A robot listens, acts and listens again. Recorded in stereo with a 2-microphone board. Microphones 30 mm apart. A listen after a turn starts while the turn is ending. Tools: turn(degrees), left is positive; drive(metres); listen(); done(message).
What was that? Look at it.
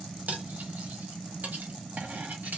turn(degrees=-65)
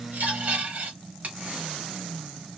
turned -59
turn(degrees=-55)
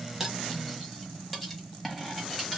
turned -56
done("Facing the cutlery clinking.")